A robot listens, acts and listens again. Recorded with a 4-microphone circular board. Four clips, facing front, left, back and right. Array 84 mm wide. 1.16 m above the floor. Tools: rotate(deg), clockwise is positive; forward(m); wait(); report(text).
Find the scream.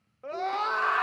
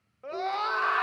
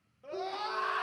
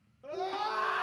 rotate(-35)
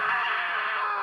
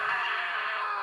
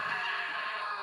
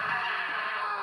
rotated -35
rotate(-10)
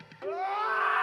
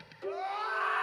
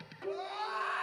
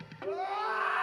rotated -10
report("Found it: a scream, straight ahead.")